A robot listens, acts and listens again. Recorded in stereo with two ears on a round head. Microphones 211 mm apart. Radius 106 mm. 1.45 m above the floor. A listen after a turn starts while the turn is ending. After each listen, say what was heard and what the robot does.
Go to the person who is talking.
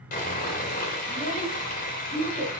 The child speaking: about 25° right or 155° right. Turn 25° right.
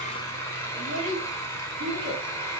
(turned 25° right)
So it is at 130° right. Turn 130° right.
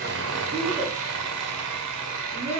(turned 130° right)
The child speaking is now 35° right. Turn 35° right.
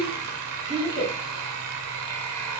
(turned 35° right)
The child speaking is now 15° right. Turn 15° right.
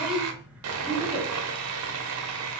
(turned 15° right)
Drive 1.0 m forward.
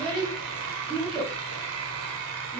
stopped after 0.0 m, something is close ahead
Something is in my way. I am facing the child speaking but have not reached it.